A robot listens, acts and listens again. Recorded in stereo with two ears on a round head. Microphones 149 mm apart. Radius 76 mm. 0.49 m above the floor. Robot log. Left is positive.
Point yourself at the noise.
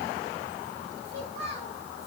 note: The child speaking: about 40° right or 140° right.
cmd yaw -40
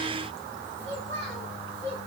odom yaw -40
note: So it is at 100° right.
cmd yaw -100
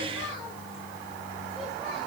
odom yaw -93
note: Nothing new. It was at 10° right.
cmd yaw -10
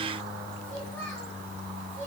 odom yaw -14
note: The child speaking is now 10° left.
cmd yaw +10
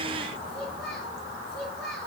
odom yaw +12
end: Found it: a child speaking, straight ahead, over 4 m away.